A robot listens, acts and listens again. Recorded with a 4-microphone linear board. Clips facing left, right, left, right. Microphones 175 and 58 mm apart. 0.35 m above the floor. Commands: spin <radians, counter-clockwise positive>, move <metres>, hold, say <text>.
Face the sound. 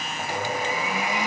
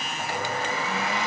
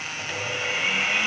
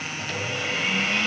spin 0.52
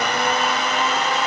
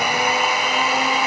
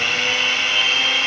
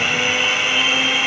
spin -0.26
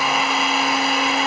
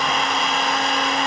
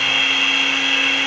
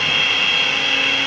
say Found it: a blender, straight ahead.